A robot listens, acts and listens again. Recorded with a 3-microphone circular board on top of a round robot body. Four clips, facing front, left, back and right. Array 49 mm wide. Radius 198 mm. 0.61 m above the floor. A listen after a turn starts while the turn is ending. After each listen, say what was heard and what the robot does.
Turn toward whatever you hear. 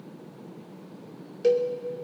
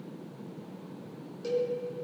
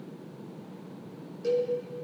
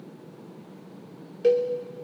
The cowbell: 55° right. Turn 55° right.
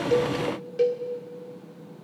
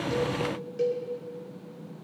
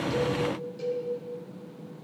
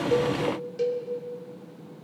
Found it: a cowbell, straight ahead.